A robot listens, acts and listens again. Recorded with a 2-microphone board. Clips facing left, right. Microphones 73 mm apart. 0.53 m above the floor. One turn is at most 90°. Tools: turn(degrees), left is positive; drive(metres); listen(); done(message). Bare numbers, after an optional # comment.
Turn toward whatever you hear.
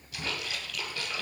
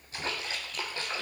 # The splash: about 35° right or 145° right.
turn(-35)
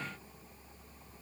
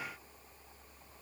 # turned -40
listen()
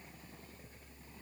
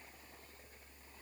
done("I heard a splash, but can't make it out now. It was about 5° left or 105° right.")